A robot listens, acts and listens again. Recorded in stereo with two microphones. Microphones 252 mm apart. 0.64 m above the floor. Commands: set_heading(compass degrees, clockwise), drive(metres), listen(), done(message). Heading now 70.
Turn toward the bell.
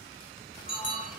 set_heading(340)
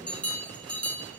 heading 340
done("Found it: a bell, straight ahead.")